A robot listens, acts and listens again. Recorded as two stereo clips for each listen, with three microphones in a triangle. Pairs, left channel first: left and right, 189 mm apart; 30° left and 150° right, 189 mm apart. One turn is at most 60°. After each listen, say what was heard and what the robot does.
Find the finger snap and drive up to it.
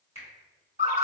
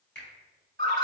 The finger snap: 35° left. Turn 35° left.
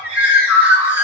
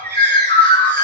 Keep listening.
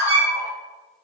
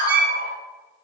Keep listening.
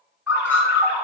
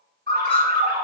Facing where the finger snap came from. I can't hear it now. I did not reach it.